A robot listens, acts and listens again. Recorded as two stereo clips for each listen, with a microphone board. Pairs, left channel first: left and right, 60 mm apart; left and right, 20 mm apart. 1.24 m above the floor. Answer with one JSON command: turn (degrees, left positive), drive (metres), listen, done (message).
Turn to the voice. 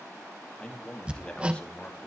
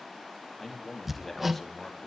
{"turn": 20}
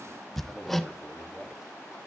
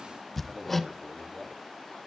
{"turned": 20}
{"done": "Facing the man speaking."}